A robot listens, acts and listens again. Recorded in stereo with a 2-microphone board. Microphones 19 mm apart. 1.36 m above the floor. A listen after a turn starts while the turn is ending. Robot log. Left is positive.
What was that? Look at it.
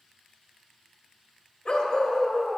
note: The dog barking: about 50° left or 130° left.
cmd yaw +50
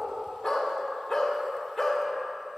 end: Facing the dog barking.